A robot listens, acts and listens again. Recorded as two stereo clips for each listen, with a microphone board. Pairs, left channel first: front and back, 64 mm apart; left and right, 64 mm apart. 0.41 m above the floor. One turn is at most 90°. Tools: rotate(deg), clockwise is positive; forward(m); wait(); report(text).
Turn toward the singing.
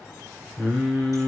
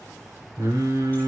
rotate(85)
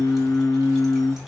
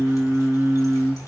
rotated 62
rotate(15)
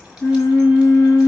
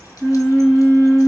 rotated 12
rotate(-10)
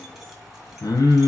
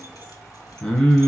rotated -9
rotate(-15)
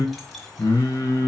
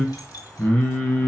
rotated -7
rotate(-30)
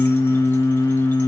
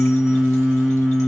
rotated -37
report("Found it: singing, straight ahead, 1 to 2 m away.")